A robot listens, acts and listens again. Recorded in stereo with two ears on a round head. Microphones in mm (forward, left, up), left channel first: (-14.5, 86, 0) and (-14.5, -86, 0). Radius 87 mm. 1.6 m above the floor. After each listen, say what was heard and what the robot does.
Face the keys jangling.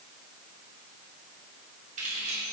The keys jangling: about 40° right or 140° right. Turn 40° right.
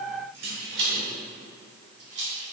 So it is at 110° right. Turn 110° right.
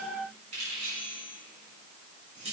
The keys jangling is now 30° right. Turn 30° right.
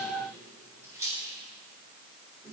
The keys jangling is now 15° right. Turn 15° right.
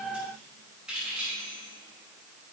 Found it: keys jangling, straight ahead.